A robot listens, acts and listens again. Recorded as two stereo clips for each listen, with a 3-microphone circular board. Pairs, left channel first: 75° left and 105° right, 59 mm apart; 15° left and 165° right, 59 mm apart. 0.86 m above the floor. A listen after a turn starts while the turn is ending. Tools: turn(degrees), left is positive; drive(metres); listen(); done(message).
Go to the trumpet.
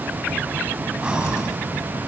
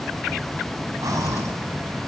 listen()
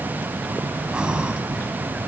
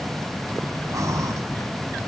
listen()
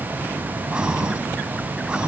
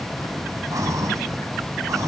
done("I can't make out a trumpet to turn to.")